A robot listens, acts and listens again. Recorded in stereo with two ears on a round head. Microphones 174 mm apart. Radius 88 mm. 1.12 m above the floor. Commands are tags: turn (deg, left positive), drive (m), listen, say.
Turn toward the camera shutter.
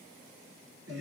<listen/>
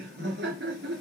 <listen/>
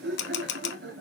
<turn deg="60"/>
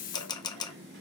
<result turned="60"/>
<turn deg="25"/>
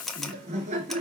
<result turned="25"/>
<say>Found it: a camera shutter, straight ahead, under 1 m away.</say>